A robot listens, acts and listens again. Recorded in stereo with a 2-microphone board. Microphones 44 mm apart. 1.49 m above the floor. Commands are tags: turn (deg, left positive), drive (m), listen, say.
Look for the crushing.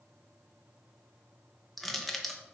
<turn deg="30"/>
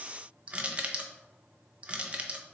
<turn deg="-25"/>
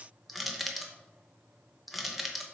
<say>Facing the crushing.</say>